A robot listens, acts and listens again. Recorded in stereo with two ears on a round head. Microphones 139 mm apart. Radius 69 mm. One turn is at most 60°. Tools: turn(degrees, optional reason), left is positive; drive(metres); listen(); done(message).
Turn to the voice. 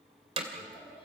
turn(degrees=35, reason="The child speaking: about 35° left or 145° left.")
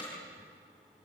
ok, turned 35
listen()
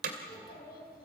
turn(degrees=60, reason="So it is at 115° left.")
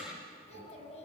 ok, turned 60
turn(degrees=45, reason="The child speaking is now 45° left.")
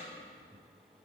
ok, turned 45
listen()
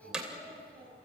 turn(degrees=10, reason="The child speaking is now 10° left.")
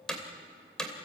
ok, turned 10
listen()
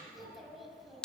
done("Facing the child speaking, over 4 m away.")